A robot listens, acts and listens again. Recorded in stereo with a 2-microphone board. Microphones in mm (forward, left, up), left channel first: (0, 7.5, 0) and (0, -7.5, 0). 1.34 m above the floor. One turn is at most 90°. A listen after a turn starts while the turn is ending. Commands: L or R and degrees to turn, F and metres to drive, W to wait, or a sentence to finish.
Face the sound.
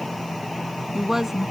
R30
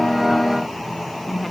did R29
Found it: a woman speaking, straight ahead.